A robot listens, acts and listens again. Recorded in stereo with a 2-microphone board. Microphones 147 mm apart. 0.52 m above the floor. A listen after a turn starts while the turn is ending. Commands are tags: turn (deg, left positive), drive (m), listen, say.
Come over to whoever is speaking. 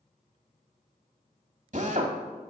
<listen/>
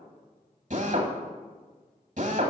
<listen/>
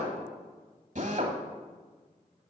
<say>I can't make out anyone speaking, only a drill.</say>